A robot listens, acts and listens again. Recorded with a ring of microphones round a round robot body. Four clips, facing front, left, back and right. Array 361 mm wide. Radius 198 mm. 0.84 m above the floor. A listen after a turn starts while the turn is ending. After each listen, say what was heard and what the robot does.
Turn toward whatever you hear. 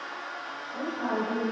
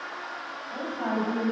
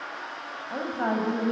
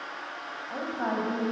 The woman speaking: 170° right. Turn 170° right.
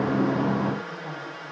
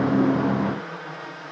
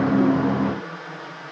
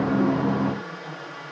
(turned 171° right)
Keep listening.
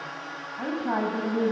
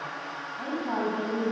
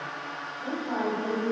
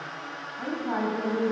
Found it: a woman speaking, straight ahead, over 4 m away.